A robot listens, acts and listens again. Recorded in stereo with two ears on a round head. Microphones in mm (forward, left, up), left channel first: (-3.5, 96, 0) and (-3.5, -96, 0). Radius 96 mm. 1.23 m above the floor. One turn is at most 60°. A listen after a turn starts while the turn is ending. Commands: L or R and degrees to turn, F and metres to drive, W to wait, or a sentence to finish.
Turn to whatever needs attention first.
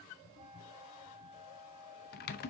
W
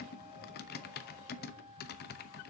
W
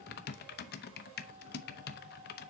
I can't make out anything urgent, only a flute and typing on a keyboard.